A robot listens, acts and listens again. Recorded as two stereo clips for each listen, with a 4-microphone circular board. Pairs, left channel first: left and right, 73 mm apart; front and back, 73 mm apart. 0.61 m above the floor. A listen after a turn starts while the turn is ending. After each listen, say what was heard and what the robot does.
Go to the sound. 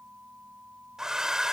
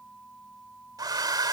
The hair dryer: 170° right. Turn 170° right.
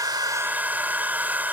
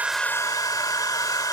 The hair dryer is now 25° right. Turn 25° right.
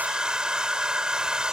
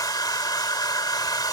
The hair dryer is now 10° right. Turn 10° right.
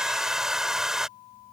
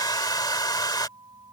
Drive 1.0 m forward.
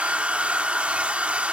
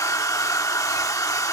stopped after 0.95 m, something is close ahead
The hair dryer is now 20° right. Turn 20° right.
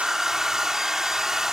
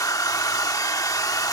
I am next to the hair dryer.